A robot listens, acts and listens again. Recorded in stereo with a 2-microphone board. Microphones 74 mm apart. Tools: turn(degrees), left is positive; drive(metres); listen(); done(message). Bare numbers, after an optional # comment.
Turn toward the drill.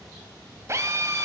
# The drill: about 40° right or 140° right.
turn(-40)
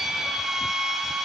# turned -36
done("Facing the drill.")